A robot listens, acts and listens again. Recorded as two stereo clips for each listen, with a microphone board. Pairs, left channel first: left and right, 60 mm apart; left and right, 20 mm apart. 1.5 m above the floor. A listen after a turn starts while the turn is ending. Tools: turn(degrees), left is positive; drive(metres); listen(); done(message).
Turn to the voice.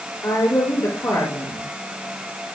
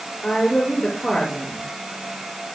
turn(degrees=65)
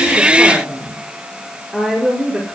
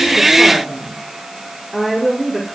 done("Found it: a woman speaking, straight ahead, over 4 m away.")